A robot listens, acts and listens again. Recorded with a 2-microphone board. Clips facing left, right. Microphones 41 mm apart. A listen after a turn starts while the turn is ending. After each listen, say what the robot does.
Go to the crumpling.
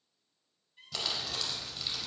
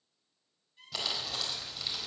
Turn 30° right.
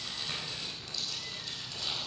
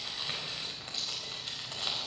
Turn 145° right.
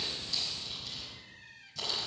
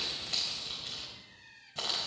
Turn 35° right.
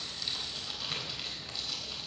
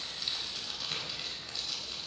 Drive 1.0 m forward.
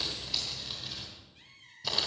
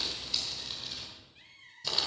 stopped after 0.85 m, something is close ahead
Blocked. The crumpling is further on, straight ahead.